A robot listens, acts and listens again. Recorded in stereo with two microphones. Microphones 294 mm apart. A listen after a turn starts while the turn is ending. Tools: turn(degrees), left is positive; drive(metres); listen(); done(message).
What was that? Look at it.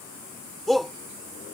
turn(degrees=30)
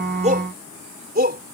turn(degrees=-30)
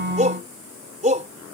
turn(degrees=-25)
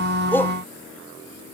listen()
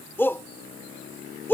turn(degrees=10)
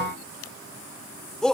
done("Facing the shout.")